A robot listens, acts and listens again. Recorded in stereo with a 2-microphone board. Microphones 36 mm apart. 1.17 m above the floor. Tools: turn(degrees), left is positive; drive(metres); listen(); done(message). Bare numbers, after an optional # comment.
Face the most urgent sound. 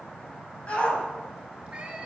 # The shout: about 30° left or 150° left.
turn(30)
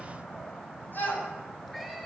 # So it is at 125° left.
turn(125)
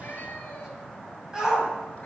# The shout is now 15° right.
turn(-15)
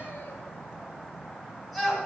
done("Found it: a shout, straight ahead.")